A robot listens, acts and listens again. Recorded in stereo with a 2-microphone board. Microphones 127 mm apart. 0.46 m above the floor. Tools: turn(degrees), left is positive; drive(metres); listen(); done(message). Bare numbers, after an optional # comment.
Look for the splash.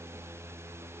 listen()
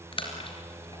# The splash: about 40° left or 140° left.
turn(40)
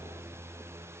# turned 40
listen()
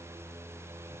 done("I heard a splash, but can't make it out now. It was about straight ahead or 100° left.")